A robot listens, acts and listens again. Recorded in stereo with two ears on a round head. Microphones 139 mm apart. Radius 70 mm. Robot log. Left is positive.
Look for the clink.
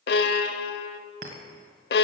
note: The clink: about 55° right or 125° right.
cmd yaw -55
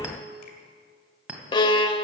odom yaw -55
note: So it is at 10° right.
cmd yaw -10
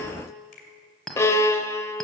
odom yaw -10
end: Found it: a clink, straight ahead, 1 to 2 m away.